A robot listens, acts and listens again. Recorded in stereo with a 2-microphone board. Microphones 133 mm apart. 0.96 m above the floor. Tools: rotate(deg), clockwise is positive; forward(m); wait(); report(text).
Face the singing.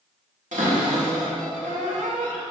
wait()
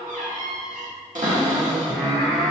rotate(-30)
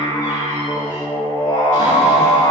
rotate(-135)
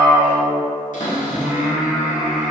rotate(10)
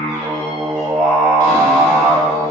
report("Facing the singing.")